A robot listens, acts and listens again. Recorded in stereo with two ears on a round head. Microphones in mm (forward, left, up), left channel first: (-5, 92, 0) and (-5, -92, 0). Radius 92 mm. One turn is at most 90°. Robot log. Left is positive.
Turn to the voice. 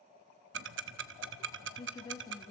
note: The woman speaking: about 20° left or 160° left.
cmd yaw +20
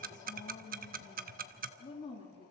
note: The woman speaking: about 25° left or 155° left.
cmd yaw +25
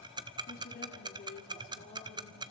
note: So it is at 135° left.
cmd yaw +90
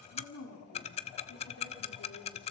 note: The woman speaking is now 80° left.
cmd yaw +80
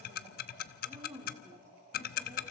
note: The woman speaking is now 15° right.
cmd yaw -15
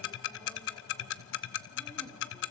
cmd idle
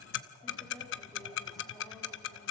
cmd idle
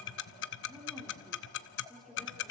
end: Found it: a woman speaking, straight ahead, 2 to 4 m away.